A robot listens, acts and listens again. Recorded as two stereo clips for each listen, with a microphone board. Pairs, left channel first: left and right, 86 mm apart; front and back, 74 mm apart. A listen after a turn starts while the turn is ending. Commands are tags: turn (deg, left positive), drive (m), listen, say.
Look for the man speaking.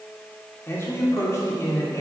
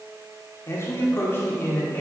<turn deg="55"/>
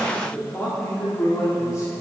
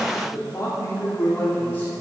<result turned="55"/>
<turn deg="55"/>
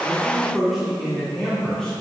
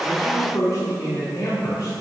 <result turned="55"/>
<turn deg="10"/>
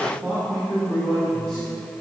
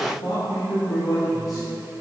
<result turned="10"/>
<say>Found it: a man speaking, straight ahead, 2 to 4 m away.</say>